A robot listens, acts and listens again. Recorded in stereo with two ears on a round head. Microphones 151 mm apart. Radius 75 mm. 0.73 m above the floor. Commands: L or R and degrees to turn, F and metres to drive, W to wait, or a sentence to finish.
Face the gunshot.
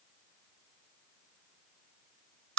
W
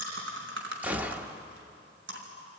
R30
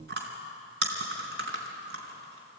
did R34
W
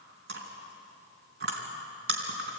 I heard a gunshot, but can't make it out now. It was about 25° left or 135° right.